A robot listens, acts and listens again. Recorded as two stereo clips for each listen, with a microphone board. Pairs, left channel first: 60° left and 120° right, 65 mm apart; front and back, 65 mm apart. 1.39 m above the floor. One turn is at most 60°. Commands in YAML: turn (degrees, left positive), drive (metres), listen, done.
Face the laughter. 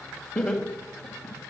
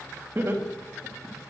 turn: 60
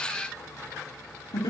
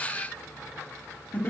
turn: 60
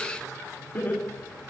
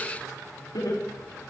done: "Facing the laughter, over 4 m away."